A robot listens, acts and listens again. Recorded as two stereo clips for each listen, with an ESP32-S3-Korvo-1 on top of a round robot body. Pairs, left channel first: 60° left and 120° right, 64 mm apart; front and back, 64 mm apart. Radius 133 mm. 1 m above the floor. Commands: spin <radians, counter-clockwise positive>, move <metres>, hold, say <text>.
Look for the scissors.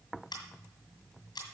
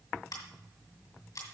spin 0.61
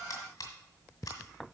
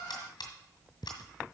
spin 0.26
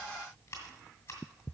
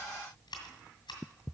say Found it: scissors, straight ahead.